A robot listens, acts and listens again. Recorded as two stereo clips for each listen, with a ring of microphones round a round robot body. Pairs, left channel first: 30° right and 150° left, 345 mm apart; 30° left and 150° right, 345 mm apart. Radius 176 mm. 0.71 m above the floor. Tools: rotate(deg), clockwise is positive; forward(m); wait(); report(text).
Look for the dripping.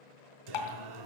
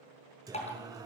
rotate(45)
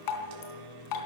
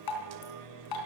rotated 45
report("Facing the dripping, 2 to 4 m away.")